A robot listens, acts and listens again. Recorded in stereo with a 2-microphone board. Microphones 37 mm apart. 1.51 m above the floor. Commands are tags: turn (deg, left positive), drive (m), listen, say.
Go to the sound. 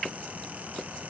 <listen/>
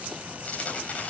<turn deg="40"/>
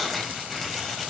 <drive m="1.0"/>
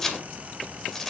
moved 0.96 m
<turn deg="10"/>
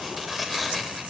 <drive m="1.0"/>
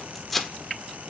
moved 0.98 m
<drive m="1.0"/>
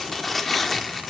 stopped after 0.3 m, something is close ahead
<say>Arrived at the tearing paper, straight ahead.</say>